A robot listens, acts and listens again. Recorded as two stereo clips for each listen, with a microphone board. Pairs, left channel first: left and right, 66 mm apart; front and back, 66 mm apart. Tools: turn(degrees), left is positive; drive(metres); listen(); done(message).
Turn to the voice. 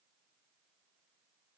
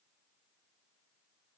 listen()
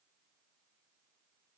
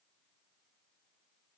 listen()
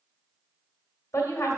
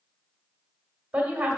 turn(degrees=115)
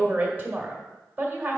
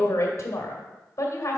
turn(degrees=-35)
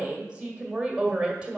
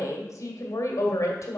turn(degrees=-20)
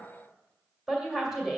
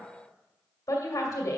done("Found it: a woman speaking, straight ahead.")